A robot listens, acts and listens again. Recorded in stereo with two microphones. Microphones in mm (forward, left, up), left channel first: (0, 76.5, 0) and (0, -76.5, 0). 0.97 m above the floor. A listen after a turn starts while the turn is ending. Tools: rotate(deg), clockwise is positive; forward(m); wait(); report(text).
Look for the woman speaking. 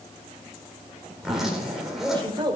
rotate(30)
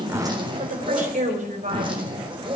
rotate(125)
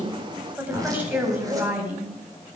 rotate(10)
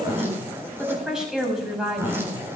report("Found it: a woman speaking, straight ahead, over 4 m away.")